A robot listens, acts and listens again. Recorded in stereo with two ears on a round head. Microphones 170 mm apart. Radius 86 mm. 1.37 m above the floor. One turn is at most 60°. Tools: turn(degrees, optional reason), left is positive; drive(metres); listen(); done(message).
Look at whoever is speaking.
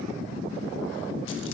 listen()
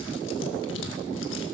listen()
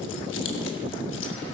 done("I can't make out anyone speaking to turn to.")